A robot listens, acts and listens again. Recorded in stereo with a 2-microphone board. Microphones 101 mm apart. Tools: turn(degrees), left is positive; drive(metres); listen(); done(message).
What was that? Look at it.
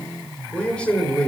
turn(degrees=30)
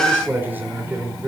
turn(degrees=-25)
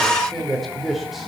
done("Facing the man speaking.")